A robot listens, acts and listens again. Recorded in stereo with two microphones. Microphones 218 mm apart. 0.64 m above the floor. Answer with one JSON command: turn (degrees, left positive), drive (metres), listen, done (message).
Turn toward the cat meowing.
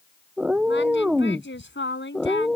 {"turn": 30}
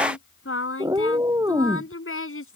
{"turn": -15}
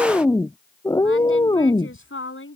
{"turn": 20}
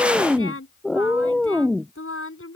{"done": "Facing the cat meowing."}